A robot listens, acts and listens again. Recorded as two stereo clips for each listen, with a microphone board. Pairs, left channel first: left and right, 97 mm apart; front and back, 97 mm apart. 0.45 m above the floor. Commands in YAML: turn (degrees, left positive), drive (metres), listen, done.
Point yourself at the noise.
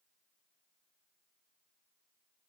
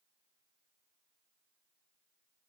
listen: true
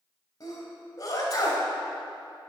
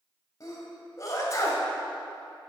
turn: 45
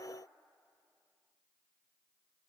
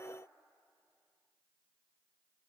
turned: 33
turn: 15
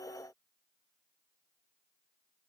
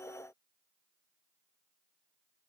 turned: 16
done: "Facing where the sneeze came from. I can't hear it now."